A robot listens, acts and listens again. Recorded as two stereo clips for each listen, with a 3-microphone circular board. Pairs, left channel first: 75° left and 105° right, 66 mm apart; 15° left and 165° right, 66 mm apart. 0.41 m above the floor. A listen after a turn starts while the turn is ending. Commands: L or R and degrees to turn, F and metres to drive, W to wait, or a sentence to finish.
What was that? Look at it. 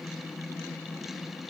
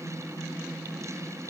W
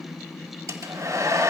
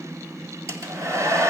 R135
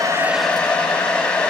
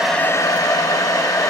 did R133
Facing the hair dryer, 1 to 2 m away.